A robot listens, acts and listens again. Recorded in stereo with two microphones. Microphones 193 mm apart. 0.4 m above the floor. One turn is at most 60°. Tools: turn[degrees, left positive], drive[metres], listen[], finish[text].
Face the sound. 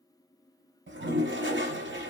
Action: turn[-60]
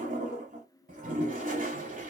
Thought: So it is at 45° right.
Action: turn[-45]
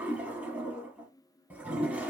Thought: The toilet flushing is now 10° right.
Action: turn[-10]
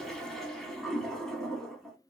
Action: finish[Found it: a toilet flushing, straight ahead.]